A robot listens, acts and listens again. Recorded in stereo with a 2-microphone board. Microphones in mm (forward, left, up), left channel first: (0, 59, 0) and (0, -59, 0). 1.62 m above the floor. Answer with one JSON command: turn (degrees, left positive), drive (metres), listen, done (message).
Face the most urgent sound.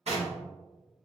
{"listen": true}
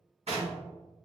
{"listen": true}
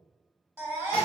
{"turn": -20}
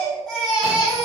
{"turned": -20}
{"done": "Facing the baby crying, 1 to 2 m away."}